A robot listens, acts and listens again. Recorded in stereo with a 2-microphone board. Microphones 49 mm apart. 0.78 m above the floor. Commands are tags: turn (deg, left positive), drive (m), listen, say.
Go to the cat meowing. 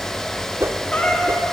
<turn deg="20"/>
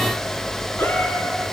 <listen/>
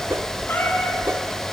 <turn deg="140"/>
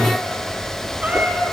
<turn deg="-25"/>
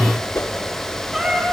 <drive m="1.0"/>
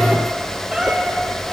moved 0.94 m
<turn deg="-10"/>
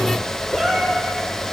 <drive m="1.0"/>
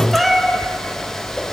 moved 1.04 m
<drive m="1.0"/>
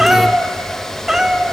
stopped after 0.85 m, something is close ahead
<turn deg="-10"/>
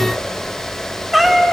<say>I am next to the cat meowing.</say>